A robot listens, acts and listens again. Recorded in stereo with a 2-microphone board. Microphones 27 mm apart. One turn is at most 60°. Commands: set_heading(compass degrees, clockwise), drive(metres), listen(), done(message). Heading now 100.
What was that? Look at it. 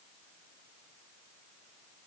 listen()
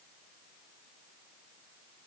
listen()
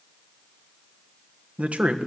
set_heading(160)
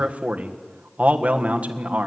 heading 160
set_heading(220)
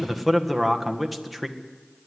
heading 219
done("Facing the man speaking.")